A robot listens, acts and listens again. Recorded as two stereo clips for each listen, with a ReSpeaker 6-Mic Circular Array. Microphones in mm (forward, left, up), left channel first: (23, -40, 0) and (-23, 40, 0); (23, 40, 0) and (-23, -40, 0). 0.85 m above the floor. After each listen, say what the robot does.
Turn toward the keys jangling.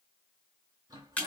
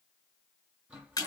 Keep listening.
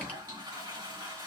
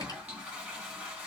Keep listening.
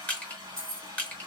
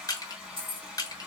Turn 135° right.
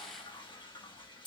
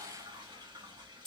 Turn 25° right.
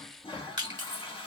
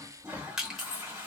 Facing the keys jangling, 1 to 2 m away.